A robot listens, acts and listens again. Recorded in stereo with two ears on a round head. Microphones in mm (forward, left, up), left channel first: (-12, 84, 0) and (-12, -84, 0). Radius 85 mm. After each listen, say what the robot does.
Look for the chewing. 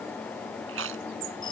Turn 90° right.
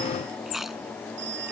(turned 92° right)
Facing the chewing.